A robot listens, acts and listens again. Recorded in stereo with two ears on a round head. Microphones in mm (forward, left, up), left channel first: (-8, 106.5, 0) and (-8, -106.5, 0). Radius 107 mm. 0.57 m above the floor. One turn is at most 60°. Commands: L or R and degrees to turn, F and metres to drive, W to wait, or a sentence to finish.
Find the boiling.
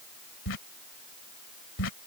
W
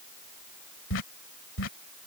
W
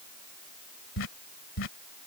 I can't make out boiling to turn to.